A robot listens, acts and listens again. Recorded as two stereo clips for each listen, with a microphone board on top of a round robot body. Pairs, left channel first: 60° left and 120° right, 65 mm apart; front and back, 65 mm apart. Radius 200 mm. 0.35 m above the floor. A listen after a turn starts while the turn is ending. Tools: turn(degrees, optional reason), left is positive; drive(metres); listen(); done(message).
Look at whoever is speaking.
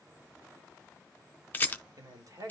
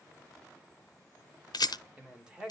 turn(degrees=-100, reason="The man speaking: 100° right.")
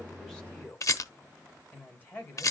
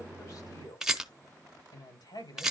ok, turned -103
done("Found it: a man speaking, straight ahead.")